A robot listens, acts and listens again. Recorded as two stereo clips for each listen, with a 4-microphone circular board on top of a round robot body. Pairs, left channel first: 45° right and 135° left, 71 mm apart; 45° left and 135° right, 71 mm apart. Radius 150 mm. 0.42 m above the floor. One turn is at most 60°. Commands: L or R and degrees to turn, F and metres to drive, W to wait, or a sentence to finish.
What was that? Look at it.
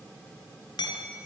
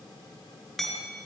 R40
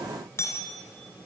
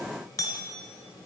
Found it: hammering, straight ahead.